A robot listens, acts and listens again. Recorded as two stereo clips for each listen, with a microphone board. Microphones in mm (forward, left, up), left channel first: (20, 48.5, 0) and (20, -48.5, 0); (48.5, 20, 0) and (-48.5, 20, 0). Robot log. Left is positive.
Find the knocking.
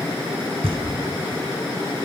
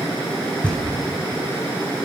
note: The knocking: 80° right.
cmd yaw -80
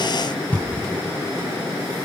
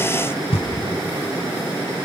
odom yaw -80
note: The knocking is now 15° left.
cmd yaw +15
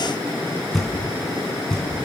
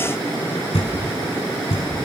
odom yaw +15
end: Facing the knocking, over 4 m away.